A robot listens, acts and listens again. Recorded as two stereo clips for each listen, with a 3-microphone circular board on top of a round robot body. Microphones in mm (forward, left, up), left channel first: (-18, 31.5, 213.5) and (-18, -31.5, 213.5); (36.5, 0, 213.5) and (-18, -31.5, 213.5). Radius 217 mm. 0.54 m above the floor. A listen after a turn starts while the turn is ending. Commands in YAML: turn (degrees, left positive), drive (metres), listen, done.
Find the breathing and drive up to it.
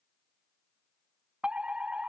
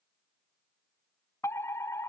listen: true
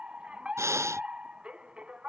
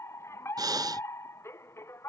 turn: -135
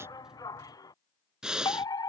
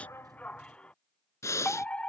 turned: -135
turn: -10
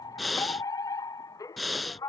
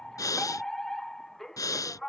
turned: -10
drive: 1.0
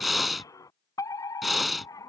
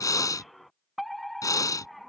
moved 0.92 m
drive: 1.0
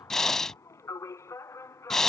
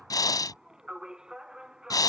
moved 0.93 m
drive: 1.0
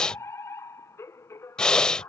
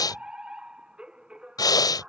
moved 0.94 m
turn: 10
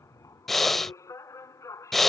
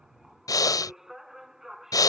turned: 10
drive: 1.0
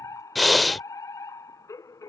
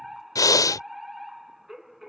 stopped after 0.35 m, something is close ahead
done: "I am next to the breathing."